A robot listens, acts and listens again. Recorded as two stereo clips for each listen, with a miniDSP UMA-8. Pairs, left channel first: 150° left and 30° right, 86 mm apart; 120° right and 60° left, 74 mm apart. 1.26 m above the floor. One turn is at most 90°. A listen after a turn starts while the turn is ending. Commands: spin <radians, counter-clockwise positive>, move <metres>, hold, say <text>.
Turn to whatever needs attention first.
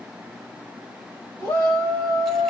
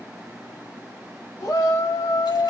spin -1.57
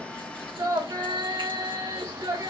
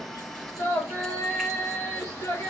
spin -1.40
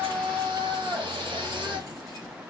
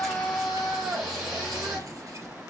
spin -0.52
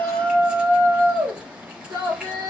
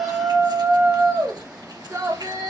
say Facing the shout, 2 to 4 m away.